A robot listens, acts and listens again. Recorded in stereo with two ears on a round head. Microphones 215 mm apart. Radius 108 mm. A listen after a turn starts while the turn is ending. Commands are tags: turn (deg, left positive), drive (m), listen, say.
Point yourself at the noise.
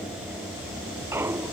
<turn deg="-30"/>
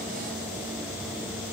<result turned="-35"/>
<listen/>
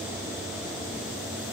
<say>I heard a clunk, but can't make it out now. It was about 25° left or 135° right.</say>